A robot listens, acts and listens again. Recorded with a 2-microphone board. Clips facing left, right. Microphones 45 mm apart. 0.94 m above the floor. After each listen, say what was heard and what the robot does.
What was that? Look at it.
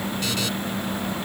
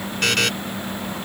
The buzzer: about 60° right or 120° right. Turn 60° right.
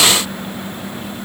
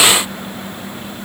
Keep listening.
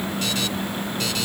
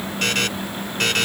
So it is at 55° right. Turn 55° right.
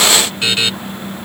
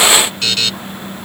The buzzer is now 20° left. Turn 20° left.
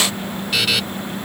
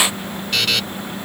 Facing the buzzer.